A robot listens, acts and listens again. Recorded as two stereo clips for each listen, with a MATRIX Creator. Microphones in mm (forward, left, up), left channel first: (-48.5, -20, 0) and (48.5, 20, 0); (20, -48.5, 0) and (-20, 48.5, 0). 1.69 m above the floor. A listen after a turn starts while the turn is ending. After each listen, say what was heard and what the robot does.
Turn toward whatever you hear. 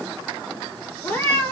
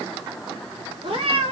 The cat meowing: 135° left. Turn 135° left.
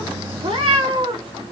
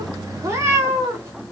The cat meowing is now 50° left. Turn 50° left.
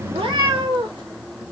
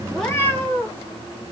Found it: a cat meowing, straight ahead, 1 to 2 m away.